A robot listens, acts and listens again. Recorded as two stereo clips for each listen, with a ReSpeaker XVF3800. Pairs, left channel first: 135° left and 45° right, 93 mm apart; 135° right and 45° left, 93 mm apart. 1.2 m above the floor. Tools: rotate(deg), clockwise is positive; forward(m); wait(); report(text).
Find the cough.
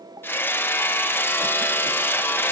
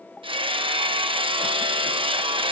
wait()
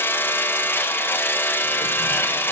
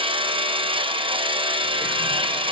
wait()
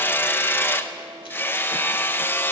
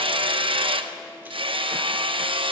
report("I can't make out a cough, only hammering.")